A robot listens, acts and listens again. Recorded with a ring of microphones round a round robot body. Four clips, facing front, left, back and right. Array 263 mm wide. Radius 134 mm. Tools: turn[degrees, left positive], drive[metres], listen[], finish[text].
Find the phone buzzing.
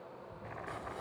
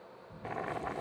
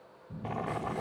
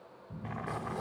Thought: The phone buzzing: 160° right.
Action: turn[-160]
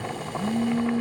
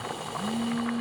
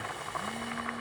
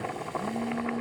Action: listen[]
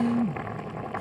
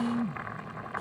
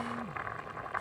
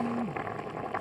Thought: The phone buzzing is now 10° left.
Action: turn[10]
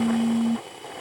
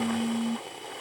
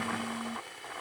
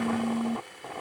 Action: listen[]
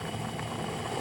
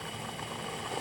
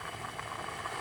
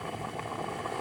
Action: listen[]
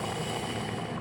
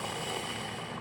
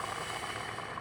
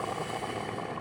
Action: finish[Facing where the phone buzzing came from. I can't hear it now.]